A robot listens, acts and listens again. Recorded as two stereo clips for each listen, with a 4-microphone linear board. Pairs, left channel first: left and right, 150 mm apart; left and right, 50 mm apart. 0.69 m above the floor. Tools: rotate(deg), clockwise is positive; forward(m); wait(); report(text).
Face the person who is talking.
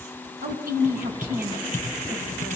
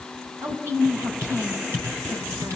rotate(90)
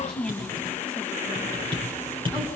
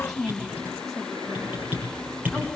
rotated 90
report("Facing the woman speaking, over 4 m away.")